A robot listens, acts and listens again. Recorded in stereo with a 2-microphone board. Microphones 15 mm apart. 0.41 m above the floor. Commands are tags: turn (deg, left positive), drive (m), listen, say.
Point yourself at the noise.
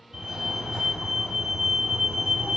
<turn deg="-60"/>
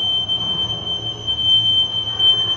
<turn deg="-20"/>
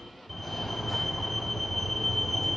<turn deg="-10"/>
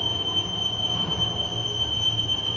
<say>Facing the fire alarm, over 4 m away.</say>